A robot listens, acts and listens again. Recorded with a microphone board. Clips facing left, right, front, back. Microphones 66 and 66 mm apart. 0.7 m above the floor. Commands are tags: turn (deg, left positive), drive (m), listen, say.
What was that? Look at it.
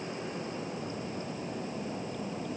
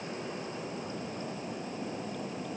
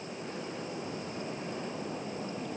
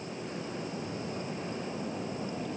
<listen/>
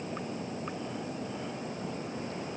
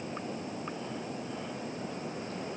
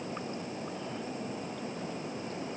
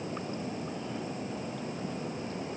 <listen/>
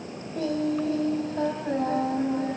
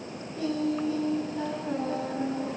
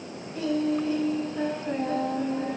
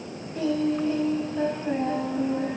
<turn deg="100"/>
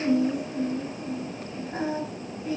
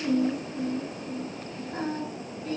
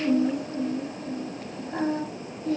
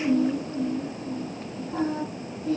<turn deg="15"/>
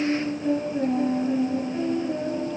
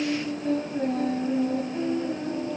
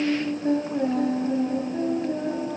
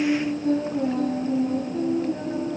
<say>Facing the singing.</say>